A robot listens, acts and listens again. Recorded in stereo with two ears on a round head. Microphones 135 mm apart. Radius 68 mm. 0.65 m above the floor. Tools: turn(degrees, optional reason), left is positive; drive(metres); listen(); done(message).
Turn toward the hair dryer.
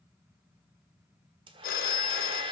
turn(degrees=-35, reason="The hair dryer: about 35° right or 145° right.")
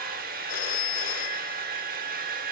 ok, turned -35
turn(degrees=-110, reason="So it is at 110° right.")
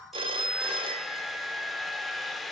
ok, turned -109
done("Found it: a hair dryer, straight ahead.")